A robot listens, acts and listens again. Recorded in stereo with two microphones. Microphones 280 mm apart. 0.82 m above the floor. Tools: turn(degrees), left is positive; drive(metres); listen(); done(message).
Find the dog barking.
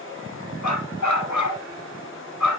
turn(degrees=90)
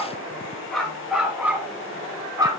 turn(degrees=-15)
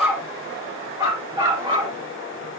turn(degrees=-15)
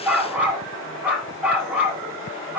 done("Facing the dog barking.")